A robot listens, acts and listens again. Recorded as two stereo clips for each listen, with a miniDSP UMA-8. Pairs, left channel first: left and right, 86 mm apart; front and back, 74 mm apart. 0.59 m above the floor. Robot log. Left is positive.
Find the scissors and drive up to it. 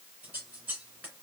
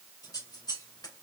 note: The scissors: 25° right.
cmd yaw -25
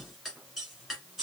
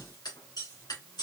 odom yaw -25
cmd fwd 1.0
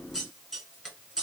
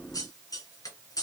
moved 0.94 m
cmd fwd 1.0
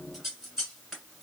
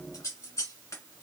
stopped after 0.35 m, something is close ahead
end: Arrived at the scissors, straight ahead.